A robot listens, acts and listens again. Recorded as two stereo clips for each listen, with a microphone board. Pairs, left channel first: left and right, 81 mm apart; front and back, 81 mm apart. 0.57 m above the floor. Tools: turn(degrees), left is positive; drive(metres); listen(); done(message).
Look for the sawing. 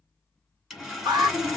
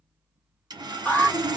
turn(degrees=-170)
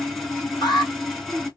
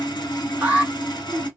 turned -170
done("Facing the sawing, 1 to 2 m away.")